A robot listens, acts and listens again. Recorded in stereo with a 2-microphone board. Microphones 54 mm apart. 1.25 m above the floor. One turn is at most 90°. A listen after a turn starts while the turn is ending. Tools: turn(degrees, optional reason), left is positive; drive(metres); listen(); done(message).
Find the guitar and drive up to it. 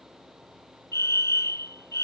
listen()
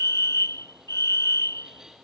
listen()
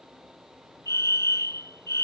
done("I can't make out a guitar to turn to.")